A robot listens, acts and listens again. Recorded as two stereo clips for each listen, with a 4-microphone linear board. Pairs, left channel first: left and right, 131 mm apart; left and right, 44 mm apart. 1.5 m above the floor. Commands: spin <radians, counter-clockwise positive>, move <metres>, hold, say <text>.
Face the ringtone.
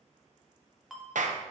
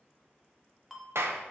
spin 0.52
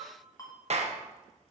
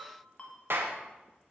spin 2.71
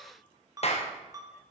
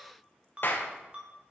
spin -0.52
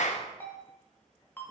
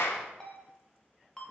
spin 0.26
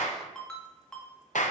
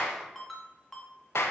say Found it: a ringtone, straight ahead.